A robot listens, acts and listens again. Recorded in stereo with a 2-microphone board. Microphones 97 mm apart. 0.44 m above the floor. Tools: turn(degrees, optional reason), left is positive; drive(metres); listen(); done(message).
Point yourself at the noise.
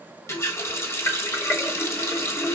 turn(degrees=30, reason="The running tap: about 30° left or 150° left.")
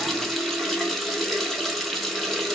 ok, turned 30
done("Facing the running tap, 1 to 2 m away.")